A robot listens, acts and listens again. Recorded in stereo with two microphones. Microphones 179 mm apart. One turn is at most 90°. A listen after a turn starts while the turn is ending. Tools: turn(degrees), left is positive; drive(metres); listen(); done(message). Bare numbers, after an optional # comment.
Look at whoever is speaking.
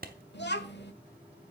# The child speaking: about 75° left or 105° left.
turn(75)
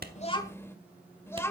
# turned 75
# So it is at 15° left.
turn(15)
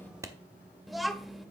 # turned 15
done("Found it: a child speaking, straight ahead, 1 to 2 m away.")